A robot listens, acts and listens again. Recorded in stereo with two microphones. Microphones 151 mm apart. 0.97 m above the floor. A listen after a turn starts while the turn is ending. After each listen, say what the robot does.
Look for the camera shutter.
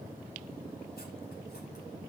Keep listening.
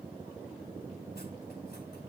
Keep listening.
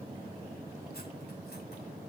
I can't make out a camera shutter to turn to.